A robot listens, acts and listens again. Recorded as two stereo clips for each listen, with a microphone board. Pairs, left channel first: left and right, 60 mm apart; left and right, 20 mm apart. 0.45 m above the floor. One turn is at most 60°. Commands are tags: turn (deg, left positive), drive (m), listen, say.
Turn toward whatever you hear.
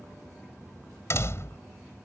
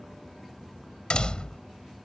<turn deg="50"/>
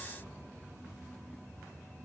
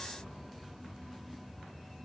<listen/>
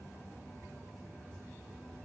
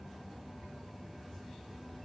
<say>I heard a door slam, but can't make it out now. It was about straight ahead or 80° left.</say>